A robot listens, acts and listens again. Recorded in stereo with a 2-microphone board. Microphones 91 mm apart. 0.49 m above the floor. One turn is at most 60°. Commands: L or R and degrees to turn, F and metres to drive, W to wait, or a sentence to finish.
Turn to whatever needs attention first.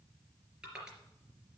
W
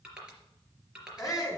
L40
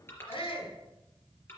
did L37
L60
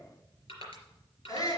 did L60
L45
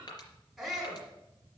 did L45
Found it: a shout, straight ahead.